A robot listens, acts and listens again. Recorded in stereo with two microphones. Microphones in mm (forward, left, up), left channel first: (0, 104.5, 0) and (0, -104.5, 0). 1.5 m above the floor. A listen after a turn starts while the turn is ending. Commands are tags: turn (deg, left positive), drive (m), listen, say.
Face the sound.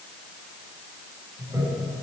<turn deg="-30"/>
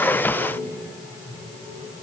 <turn deg="15"/>
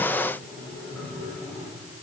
<say>Facing the toilet flushing.</say>